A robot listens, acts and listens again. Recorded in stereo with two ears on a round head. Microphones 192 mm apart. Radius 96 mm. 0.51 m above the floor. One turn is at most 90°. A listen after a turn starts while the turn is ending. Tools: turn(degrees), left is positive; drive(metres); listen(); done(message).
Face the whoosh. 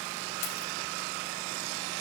listen()
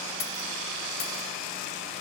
listen()
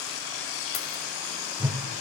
turn(degrees=-30)
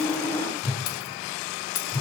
turn(degrees=15)
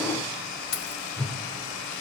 done("Found it: a whoosh, straight ahead, under 1 m away.")